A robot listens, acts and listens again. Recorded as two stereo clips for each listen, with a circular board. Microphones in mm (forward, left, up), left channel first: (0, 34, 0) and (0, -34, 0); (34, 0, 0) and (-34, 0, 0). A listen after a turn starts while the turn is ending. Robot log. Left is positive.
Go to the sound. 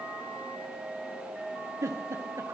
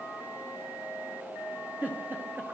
note: The giggle: 120° right.
cmd yaw -120
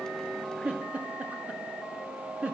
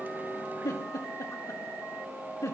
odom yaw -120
note: The giggle is now 25° right.
cmd yaw -25
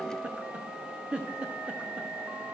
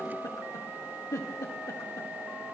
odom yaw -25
note: The giggle is now 20° right.
cmd yaw -20
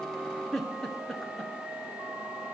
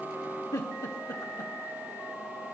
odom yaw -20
cmd fwd 1.0
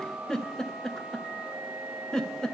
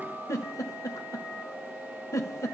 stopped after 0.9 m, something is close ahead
note: The giggle is now 10° left.
cmd yaw +10
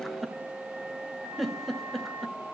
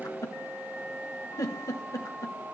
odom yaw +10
end: Arrived at the giggle, straight ahead.